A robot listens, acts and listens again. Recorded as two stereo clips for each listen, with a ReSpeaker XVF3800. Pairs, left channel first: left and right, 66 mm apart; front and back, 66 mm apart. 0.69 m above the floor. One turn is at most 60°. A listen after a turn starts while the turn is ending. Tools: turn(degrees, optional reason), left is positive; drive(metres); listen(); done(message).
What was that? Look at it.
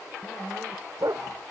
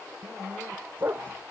turn(degrees=-60, reason="The dog barking: 120° right.")
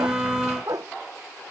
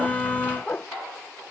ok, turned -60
turn(degrees=-60, reason="The dog barking is now 60° right.")
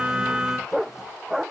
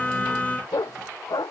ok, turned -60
done("Facing the dog barking.")